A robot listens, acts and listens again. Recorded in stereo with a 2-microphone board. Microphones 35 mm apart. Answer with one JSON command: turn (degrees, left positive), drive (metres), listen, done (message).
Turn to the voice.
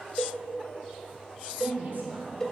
{"turn": -60}
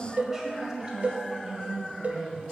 {"turn": -30}
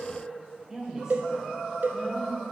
{"turn": -35}
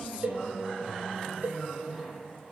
{"turn": -20}
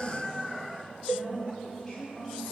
{"done": "Found it: a woman speaking, straight ahead, 1 to 2 m away."}